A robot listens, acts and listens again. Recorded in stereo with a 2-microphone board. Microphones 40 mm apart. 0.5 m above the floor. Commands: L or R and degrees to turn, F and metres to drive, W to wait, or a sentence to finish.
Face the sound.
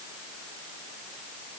W
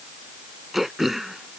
R30
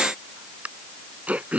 R145
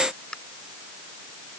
L20
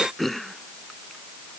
Found it: throat clearing, straight ahead.